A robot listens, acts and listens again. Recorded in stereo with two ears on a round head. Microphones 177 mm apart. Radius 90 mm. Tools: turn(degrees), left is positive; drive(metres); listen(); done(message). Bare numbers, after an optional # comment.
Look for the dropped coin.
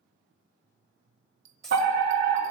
turn(30)
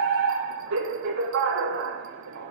listen()
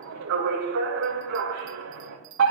done("I heard a dropped coin, but can't make it out now. It was about 30° right or 150° left.")